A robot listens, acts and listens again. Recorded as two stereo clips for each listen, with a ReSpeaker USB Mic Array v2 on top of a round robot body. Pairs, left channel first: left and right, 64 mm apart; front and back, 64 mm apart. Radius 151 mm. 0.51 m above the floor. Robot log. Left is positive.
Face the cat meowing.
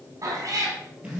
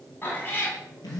note: The cat meowing: 60° right.
cmd yaw -60
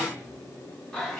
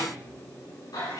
end: Facing the cat meowing.